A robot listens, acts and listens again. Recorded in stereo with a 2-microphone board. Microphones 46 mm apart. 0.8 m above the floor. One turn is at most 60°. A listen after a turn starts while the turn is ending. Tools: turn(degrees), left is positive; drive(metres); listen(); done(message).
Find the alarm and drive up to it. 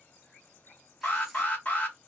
turn(degrees=40)
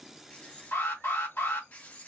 turn(degrees=60)
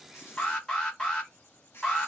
turn(degrees=15)
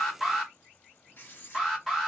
drive(metres=1.0)
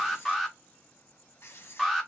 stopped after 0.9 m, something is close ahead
done("Arrived at the alarm, straight ahead.")